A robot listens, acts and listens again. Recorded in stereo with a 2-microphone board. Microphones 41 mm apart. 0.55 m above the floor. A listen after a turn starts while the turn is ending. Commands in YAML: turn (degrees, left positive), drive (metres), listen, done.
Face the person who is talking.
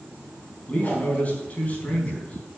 turn: 40
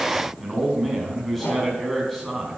done: "Facing the man speaking."